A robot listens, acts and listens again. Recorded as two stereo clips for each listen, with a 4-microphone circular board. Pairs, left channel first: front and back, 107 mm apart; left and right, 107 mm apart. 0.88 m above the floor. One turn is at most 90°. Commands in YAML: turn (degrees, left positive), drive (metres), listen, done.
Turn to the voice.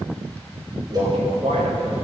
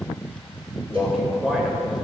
turn: -90
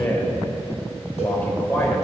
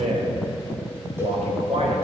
turn: -75
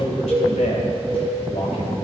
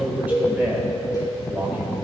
turn: -15
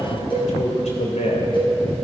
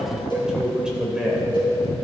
turn: -10
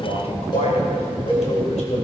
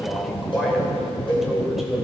done: "Facing the man speaking."